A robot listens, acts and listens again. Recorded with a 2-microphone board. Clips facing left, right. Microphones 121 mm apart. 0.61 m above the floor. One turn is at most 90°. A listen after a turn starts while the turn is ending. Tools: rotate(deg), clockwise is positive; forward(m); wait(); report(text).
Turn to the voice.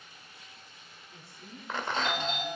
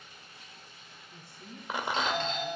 rotate(15)
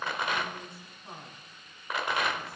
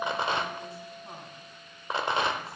report("Found it: a woman speaking, straight ahead, 2 to 4 m away.")